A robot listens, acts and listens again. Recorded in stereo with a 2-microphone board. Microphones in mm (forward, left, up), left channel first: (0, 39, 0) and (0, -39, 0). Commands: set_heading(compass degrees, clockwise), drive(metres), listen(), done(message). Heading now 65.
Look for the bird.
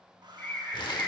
set_heading(45)
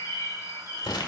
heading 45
set_heading(265)
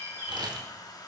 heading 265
set_heading(295)
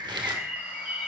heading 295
set_heading(315)
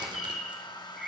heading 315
done("Found it: a bird, straight ahead.")